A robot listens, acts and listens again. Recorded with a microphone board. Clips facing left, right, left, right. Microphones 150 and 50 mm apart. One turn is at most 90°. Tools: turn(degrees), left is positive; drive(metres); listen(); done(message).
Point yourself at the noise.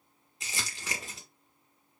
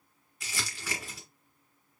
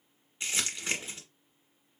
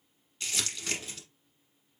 turn(degrees=25)
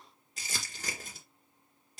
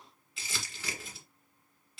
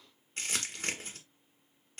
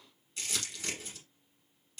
turn(degrees=90)
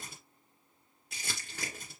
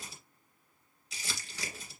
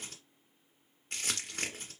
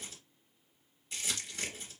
turn(degrees=65)
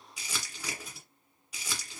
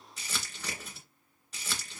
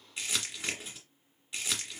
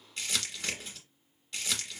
turn(degrees=15)
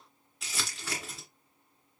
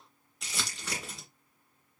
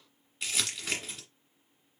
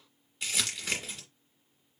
done("Facing the crumpling, 1 to 2 m away.")